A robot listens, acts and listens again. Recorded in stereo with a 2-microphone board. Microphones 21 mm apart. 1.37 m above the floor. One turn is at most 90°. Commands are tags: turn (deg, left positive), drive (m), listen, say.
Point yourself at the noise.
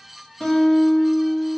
<turn deg="40"/>
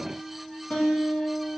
<turn deg="90"/>
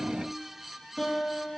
<turn deg="15"/>
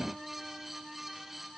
<listen/>
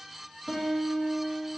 <say>Found it: a guitar, straight ahead, under 1 m away.</say>